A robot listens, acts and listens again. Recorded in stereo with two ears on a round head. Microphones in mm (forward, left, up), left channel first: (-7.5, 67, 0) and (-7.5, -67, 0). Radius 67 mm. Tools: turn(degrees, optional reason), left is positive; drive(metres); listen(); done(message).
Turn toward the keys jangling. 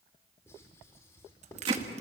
turn(degrees=-50, reason="The keys jangling: about 50° right or 130° right.")
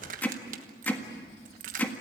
turn(degrees=-70, reason="So it is at 70° right.")
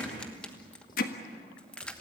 turn(degrees=10, reason="The keys jangling is now 10° left.")
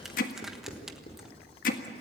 done("Facing the keys jangling.")